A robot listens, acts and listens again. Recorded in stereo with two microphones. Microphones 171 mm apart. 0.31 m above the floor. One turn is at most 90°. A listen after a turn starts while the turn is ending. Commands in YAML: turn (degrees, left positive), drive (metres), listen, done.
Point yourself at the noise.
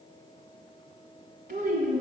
turn: -60
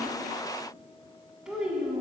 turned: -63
done: "Found it: a child speaking, straight ahead, 1 to 2 m away."